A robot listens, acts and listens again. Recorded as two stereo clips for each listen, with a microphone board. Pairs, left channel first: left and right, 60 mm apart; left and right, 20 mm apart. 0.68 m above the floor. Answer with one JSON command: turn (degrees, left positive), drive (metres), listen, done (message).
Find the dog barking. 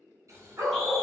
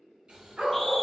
{"turn": -75}
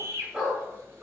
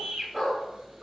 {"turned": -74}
{"turn": -25}
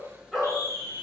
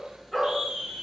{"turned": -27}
{"turn": -10}
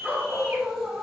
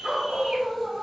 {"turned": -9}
{"turn": -25}
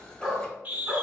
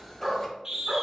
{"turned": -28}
{"turn": -15}
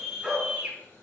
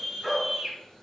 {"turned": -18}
{"done": "Found it: a dog barking, straight ahead."}